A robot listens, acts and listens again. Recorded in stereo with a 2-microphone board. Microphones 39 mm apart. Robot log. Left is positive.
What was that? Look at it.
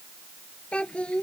note: The child speaking: about 30° left or 150° left.
cmd yaw +30
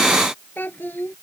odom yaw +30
note: So it is at 120° left.
cmd yaw +120
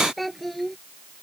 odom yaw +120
end: Facing the child speaking.